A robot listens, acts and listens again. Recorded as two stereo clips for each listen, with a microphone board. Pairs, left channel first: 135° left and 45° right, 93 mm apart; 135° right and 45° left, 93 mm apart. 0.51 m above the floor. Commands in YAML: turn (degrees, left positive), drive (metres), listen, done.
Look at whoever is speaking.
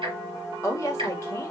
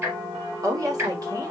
turn: 85
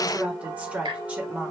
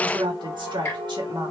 turn: 30
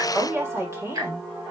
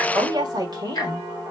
turn: 15
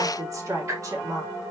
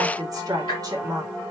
done: "Facing the woman speaking."